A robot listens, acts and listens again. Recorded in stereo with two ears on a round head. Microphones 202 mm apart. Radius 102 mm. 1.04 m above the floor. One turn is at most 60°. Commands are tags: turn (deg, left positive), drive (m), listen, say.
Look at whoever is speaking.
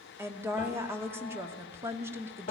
<turn deg="-30"/>
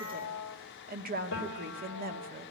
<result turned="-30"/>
<turn deg="-60"/>
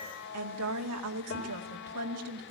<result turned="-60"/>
<turn deg="-60"/>
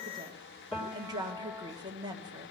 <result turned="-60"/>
<turn deg="-20"/>
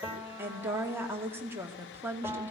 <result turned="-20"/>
<turn deg="-10"/>
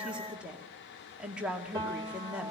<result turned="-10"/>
<say>Found it: a woman speaking, straight ahead, 2 to 4 m away.</say>